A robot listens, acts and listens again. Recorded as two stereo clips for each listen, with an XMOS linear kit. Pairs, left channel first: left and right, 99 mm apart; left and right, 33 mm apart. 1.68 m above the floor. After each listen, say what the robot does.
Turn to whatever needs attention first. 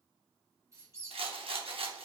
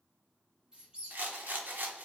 Keep listening.
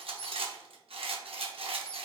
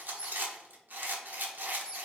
Keep listening.
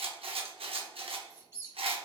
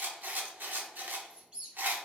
I can't make out anything urgent to turn to.